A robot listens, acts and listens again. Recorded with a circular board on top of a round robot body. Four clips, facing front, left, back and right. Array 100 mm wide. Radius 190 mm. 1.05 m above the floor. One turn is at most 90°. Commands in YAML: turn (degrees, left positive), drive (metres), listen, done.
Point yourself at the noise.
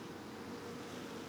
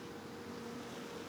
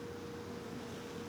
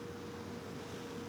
listen: true
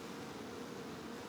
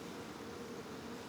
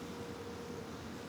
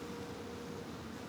listen: true
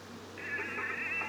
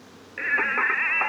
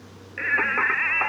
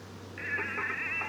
turn: 90
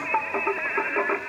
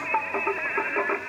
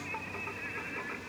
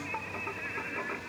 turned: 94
turn: 35
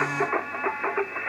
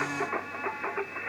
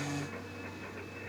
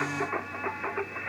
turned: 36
done: "Facing the singing."